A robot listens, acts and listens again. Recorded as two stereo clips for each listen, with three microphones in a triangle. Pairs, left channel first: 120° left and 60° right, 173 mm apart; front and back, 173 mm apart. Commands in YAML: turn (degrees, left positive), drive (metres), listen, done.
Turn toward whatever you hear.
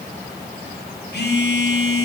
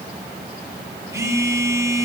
turn: 110
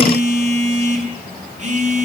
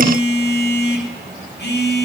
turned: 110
turn: -10
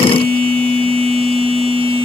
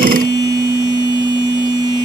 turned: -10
done: "Found it: a phone buzzing, straight ahead, 1 to 2 m away."